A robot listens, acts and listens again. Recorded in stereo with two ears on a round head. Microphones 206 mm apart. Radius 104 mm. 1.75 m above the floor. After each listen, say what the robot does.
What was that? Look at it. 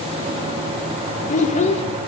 Turn 30° left.
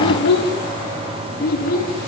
Turn 45° left.
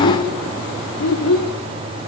Turn 105° left.
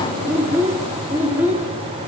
Turn 10° right.
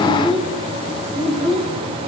Found it: a child speaking, straight ahead.